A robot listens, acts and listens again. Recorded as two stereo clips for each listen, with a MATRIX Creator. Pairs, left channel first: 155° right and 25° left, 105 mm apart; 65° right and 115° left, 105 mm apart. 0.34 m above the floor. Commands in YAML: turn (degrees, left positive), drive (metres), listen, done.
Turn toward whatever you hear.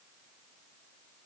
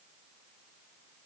listen: true
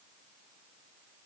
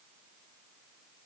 listen: true
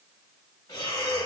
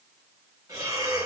turn: 160
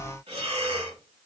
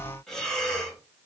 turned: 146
turn: 15
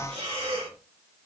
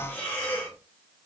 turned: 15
done: "Facing the breathing, 1 to 2 m away."